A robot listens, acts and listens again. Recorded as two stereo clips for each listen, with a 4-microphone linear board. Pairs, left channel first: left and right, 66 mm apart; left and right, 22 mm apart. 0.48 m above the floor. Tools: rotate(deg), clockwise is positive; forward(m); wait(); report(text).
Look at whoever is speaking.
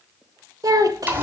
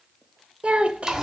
rotate(65)
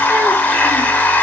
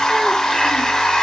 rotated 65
wait()
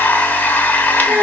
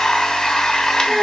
rotate(20)
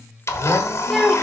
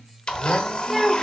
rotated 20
report("Facing the child speaking.")